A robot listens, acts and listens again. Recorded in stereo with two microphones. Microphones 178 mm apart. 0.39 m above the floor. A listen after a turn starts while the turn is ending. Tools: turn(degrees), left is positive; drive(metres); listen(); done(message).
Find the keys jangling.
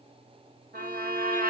listen()
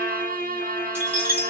turn(degrees=-30)
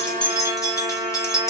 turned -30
turn(degrees=15)
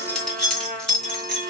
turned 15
done("Found it: keys jangling, straight ahead, 2 to 4 m away.")